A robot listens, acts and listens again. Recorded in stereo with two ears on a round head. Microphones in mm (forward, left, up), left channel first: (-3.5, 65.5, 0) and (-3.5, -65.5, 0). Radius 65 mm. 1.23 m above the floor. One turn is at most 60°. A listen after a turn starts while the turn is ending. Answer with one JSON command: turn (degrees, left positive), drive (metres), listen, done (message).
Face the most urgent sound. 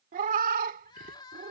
{"turn": 30}
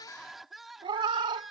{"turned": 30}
{"done": "Found it: crying, straight ahead."}